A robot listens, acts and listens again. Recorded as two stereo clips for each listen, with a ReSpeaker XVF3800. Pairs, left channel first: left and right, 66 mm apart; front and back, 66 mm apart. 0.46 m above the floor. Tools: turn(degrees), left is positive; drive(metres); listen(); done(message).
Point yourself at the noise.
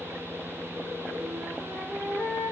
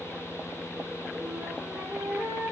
turn(degrees=-135)
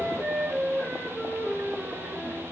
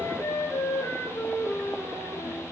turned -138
done("Facing the flute, over 4 m away.")